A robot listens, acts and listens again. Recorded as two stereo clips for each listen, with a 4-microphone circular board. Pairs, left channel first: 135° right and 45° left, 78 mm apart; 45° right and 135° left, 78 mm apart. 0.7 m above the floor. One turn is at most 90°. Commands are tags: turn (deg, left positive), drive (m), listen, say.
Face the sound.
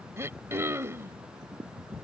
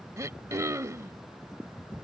<turn deg="90"/>
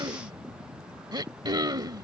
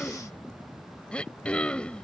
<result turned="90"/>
<turn deg="30"/>
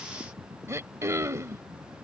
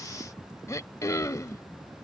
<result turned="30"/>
<say>Found it: throat clearing, straight ahead.</say>